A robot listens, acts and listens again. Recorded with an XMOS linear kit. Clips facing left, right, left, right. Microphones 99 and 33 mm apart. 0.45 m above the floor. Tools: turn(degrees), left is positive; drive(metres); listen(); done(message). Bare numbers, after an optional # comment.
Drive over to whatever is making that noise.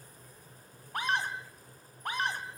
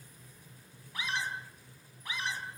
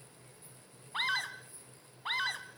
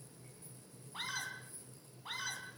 # The scream: about 55° left or 125° left.
turn(55)
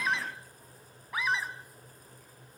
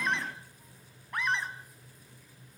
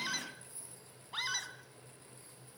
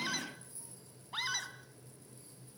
drive(1.0)
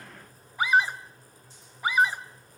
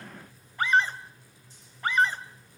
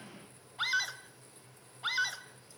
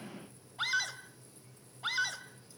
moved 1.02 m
# The scream is now 10° left.
turn(10)
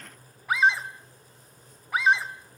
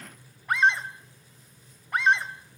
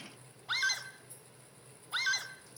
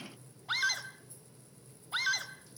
drive(1.0)
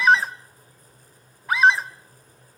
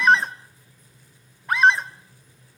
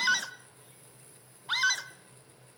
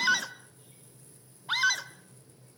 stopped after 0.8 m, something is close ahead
done("Arrived at the scream, straight ahead.")